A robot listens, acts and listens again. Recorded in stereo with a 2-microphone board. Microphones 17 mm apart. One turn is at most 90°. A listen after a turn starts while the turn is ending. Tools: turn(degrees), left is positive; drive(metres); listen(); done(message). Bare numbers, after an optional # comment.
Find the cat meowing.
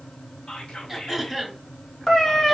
# The cat meowing: about 30° left or 150° left.
turn(30)
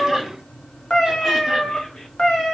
# So it is at 115° left.
turn(90)
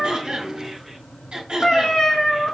# The cat meowing is now 55° left.
turn(55)
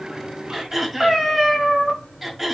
# The cat meowing is now 10° right.
turn(-10)
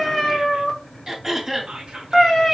done("Found it: a cat meowing, straight ahead.")